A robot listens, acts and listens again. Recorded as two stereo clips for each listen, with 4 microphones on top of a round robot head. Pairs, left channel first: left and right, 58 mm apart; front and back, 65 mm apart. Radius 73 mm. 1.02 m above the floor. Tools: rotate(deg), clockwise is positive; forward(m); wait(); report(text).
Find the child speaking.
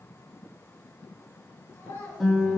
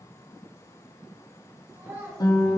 rotate(-135)
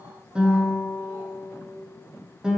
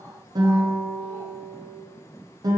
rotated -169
rotate(35)
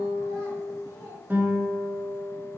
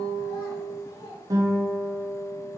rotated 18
rotate(15)
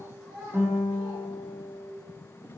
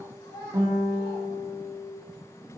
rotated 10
report("Found it: a child speaking, straight ahead, 2 to 4 m away.")